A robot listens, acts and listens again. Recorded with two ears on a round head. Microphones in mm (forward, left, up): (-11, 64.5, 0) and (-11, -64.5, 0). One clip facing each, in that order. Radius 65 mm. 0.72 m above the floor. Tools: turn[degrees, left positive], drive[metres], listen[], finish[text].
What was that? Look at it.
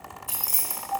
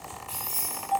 Action: turn[90]
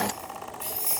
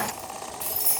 Thought: So it is at 45° right.
Action: turn[-45]
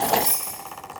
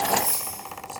Action: finish[Facing the keys jangling, 2 to 4 m away.]